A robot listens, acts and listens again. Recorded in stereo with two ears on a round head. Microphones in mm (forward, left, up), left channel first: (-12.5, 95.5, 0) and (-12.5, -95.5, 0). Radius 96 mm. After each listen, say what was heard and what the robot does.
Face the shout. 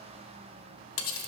Keep listening.
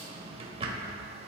Keep listening.
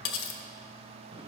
I can't make out a shout, only cutlery clinking and a drawer.